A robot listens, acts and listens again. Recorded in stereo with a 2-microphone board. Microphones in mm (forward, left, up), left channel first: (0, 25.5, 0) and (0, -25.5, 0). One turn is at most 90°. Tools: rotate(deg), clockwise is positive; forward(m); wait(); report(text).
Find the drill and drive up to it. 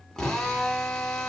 rotate(-30)
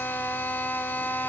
rotate(-90)
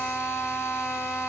rotate(-60)
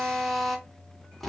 forward(1.0)
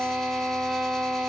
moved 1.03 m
forward(1.0)
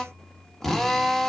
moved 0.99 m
rotate(-10)
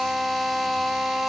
forward(1.0)
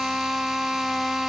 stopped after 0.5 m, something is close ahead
report("Arrived at the drill, straight ahead.")